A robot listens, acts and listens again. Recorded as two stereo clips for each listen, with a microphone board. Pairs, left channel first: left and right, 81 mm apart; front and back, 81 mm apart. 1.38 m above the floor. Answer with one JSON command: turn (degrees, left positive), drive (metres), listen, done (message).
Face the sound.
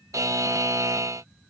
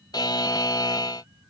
{"turn": -40}
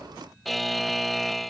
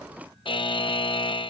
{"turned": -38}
{"done": "Found it: a buzzer, straight ahead."}